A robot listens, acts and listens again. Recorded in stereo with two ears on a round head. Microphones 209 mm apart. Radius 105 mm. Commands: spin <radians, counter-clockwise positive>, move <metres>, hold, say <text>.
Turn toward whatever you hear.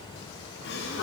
spin 0.79
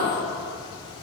hold
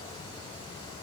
say I heard a gasp, but can't make it out now. It was about straight ahead or 90° left.